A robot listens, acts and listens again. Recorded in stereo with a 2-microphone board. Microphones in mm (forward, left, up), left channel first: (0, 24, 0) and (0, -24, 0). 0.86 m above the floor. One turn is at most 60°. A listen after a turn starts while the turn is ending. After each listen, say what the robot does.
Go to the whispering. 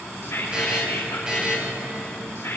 Turn 60° left.
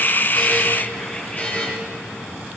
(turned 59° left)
Keep listening.
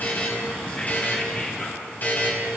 Keep listening.
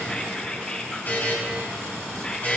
Turn 25° left.
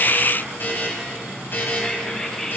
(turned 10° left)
Turn 15° left.
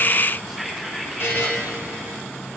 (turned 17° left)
Drive 1.0 m forward.
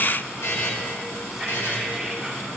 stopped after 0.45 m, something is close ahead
Keep listening.
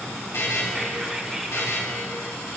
Keep listening.
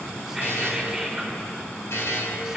Turn 10° right.
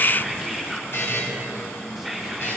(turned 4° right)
Something is in my way. I am facing the whispering but have not reached it.